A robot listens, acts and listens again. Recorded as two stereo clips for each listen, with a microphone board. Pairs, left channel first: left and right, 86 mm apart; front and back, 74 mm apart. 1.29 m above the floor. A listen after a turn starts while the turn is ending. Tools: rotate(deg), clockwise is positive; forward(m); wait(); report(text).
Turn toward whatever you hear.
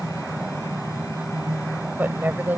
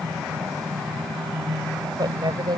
rotate(160)
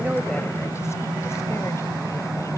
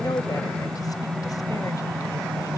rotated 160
wait()
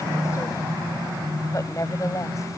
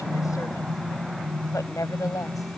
rotate(-40)
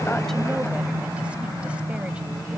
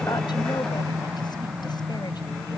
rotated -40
wait()
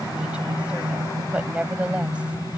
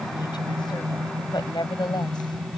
rotate(10)
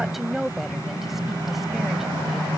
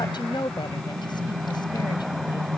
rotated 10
report("Facing the woman speaking.")